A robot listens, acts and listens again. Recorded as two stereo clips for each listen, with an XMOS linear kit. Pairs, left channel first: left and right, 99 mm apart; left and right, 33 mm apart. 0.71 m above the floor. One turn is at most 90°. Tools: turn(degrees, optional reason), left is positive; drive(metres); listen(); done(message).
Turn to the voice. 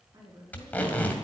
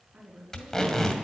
turn(degrees=-40, reason="The woman speaking: about 40° right or 140° right.")
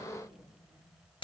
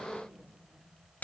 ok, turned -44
turn(degrees=-90, reason="So it is at 100° right.")
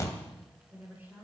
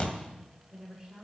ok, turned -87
turn(degrees=-20, reason="The woman speaking is now 20° right.")
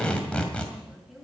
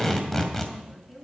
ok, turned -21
done("Found it: a woman speaking, straight ahead, over 4 m away.")